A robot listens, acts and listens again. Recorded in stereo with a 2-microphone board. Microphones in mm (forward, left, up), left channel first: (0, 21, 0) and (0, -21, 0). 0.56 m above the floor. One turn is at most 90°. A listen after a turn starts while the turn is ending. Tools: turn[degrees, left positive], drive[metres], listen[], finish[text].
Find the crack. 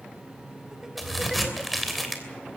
Action: turn[30]
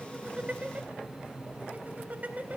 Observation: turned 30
Action: listen[]
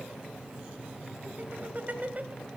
Action: finish[I heard a crack, but can't make it out now. It was about 30° right or 150° left.]